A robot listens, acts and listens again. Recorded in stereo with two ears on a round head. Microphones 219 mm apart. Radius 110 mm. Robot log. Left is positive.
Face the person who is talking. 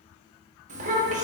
note: The child speaking: about 30° right or 150° right.
cmd yaw -30
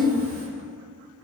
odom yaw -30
note: So it is at 115° right.
cmd yaw -115
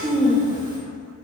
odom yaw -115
note: The child speaking is now 20° right.
cmd yaw -20
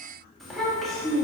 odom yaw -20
end: Found it: a child speaking, straight ahead.